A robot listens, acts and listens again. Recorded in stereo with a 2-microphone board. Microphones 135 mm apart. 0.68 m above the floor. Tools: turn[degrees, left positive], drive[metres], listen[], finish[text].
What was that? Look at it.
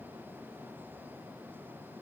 Action: listen[]
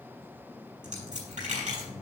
Thought: The dropped coin: about 70° right or 110° right.
Action: turn[-70]
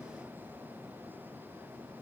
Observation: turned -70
Action: listen[]
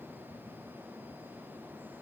Action: finish[I heard a dropped coin, but can't make it out now. It was about straight ahead or 40° right.]